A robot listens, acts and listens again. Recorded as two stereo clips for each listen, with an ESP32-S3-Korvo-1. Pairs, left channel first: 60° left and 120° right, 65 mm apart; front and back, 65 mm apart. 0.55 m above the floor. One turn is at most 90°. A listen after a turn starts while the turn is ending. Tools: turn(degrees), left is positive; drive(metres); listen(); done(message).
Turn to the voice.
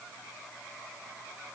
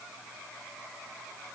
listen()
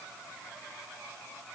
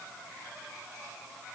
listen()
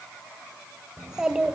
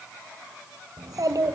turn(degrees=90)
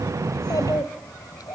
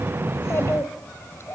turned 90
turn(degrees=45)
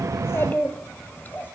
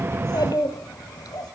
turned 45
done("Found it: a child speaking, straight ahead.")